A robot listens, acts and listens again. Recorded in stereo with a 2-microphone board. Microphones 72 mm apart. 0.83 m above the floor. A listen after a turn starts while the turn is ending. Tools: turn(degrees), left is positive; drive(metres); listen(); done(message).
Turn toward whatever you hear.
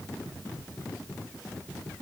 listen()
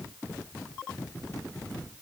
listen()
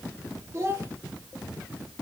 turn(degrees=-35)
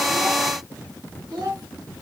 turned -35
turn(degrees=-110)
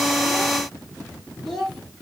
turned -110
done("Facing the child speaking, 1 to 2 m away.")